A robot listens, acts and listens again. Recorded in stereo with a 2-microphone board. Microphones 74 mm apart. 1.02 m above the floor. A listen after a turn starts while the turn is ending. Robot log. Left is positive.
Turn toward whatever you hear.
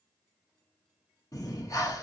note: The breathing: about 50° left or 130° left.
cmd yaw +50
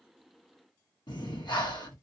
note: So it is at 85° left.
cmd yaw +85
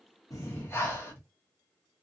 note: The breathing is now 35° left.
cmd yaw +35
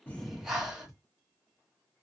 note: The breathing is now 10° right.
cmd yaw -10
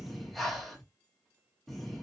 end: Found it: breathing, straight ahead.